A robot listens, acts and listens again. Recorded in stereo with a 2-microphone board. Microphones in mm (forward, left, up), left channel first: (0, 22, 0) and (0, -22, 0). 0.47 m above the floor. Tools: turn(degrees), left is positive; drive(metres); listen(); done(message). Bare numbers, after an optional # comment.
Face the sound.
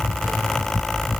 listen()
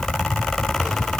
listen()
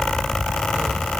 done("I can't make out anything.")